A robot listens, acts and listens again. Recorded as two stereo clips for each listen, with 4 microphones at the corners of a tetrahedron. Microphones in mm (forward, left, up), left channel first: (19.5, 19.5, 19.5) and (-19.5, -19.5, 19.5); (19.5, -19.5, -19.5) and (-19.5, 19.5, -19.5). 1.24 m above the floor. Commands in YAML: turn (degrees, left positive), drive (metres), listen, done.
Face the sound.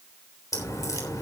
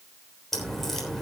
turn: 40
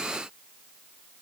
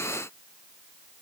done: "Facing where the crack came from. I can't hear it now."